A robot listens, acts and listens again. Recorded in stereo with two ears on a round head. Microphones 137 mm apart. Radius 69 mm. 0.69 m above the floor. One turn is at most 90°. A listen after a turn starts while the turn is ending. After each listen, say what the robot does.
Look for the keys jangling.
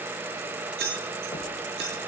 Turn 90° right.
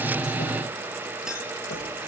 Keep listening.
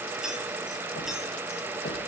Keep listening.
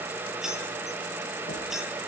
Found it: keys jangling, straight ahead.